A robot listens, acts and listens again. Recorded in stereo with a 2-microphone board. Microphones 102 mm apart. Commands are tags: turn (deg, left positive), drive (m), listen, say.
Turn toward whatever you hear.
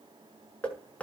<turn deg="30"/>
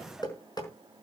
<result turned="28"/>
<turn deg="140"/>
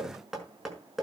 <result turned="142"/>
<say>Found it: knocking, straight ahead, over 4 m away.</say>